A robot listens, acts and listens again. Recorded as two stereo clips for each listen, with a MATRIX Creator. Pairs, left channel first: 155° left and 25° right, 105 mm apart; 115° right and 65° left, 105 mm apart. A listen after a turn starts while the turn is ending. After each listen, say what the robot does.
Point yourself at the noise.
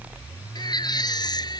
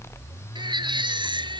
Turn 110° left.
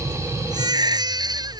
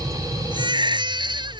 Turn 25° left.
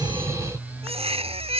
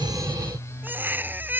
Facing the baby crying.